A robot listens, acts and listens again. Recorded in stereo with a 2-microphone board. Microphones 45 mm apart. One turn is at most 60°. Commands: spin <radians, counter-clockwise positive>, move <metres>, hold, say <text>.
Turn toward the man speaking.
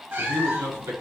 spin -1.05
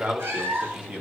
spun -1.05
spin -0.44
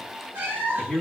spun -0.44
spin 0.17
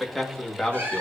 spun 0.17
spin 0.17
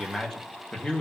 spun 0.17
spin 0.44
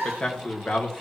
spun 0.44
spin 0.52
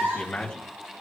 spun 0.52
spin 0.35
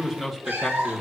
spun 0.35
say Found it: a man speaking, straight ahead, 1 to 2 m away.